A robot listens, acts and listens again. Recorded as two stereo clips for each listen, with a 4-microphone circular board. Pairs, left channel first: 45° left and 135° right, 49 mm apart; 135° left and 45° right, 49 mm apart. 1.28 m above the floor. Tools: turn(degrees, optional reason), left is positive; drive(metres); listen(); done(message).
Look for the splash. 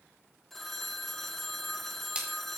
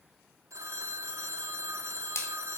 turn(degrees=155, reason="The splash: 155° left.")
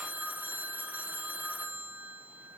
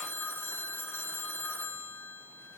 done("Facing where the splash came from. I can't hear it now.")